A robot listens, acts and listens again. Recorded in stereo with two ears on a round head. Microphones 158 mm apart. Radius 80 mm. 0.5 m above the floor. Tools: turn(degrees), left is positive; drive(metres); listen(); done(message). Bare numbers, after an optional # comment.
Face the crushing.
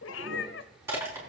turn(-30)
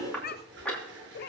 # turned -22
done("Facing the crushing.")